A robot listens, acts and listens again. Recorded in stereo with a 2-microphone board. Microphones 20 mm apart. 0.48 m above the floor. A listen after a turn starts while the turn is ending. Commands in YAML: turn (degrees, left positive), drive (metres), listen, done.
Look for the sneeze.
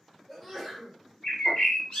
turn: 30
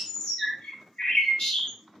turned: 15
listen: true
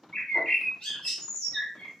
done: "I heard a sneeze, but can't make it out now. It was about 5° right or 155° left."